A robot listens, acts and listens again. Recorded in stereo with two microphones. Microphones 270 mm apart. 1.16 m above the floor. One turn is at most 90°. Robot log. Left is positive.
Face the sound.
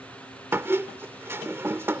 cmd yaw -30
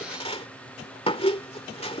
note: So it is at 20° left.
cmd yaw +20
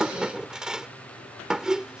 end: Facing the squeak.